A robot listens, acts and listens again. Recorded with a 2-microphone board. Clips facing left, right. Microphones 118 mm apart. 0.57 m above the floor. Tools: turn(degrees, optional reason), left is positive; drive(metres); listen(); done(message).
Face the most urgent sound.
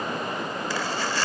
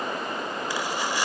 listen()
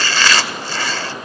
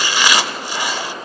listen()
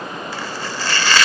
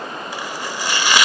done("I can't make out anything urgent to turn to.")